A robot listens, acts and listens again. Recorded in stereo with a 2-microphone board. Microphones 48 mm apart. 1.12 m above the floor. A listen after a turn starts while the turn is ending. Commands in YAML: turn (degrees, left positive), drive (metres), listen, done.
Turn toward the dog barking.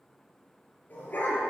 turn: 45
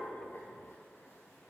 listen: true
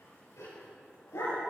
turn: 95
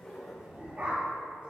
turn: -30
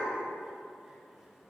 listen: true
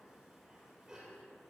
turn: -15
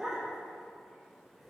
done: "Facing the dog barking."